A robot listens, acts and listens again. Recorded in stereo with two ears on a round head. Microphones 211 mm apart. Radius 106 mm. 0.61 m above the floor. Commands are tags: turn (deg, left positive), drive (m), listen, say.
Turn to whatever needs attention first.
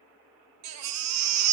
<turn deg="-90"/>
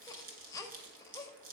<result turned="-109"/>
<turn deg="15"/>
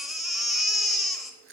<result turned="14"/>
<say>Facing the baby crying.</say>